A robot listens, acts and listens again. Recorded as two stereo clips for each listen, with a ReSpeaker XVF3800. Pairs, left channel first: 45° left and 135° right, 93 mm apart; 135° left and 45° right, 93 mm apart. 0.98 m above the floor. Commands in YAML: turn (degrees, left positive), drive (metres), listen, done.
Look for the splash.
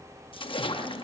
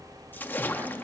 turn: 65
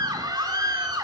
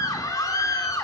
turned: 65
done: "I heard a splash from this way, but can't make it out now."